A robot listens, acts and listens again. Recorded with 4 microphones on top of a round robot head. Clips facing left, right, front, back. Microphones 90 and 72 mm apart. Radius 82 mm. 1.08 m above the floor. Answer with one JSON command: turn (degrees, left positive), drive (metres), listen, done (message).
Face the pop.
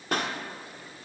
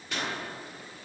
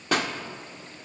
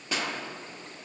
{"turn": 35}
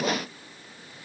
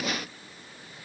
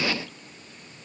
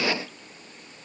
{"done": "I heard a pop from this way, but can't make it out now."}